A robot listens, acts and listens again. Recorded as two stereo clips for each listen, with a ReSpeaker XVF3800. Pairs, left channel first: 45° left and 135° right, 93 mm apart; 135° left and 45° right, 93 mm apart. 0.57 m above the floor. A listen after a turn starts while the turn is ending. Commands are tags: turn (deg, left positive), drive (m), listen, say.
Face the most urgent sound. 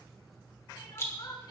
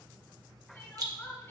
<turn deg="70"/>
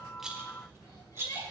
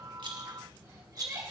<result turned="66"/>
<listen/>
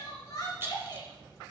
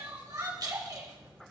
<say>Found it: crying, straight ahead.</say>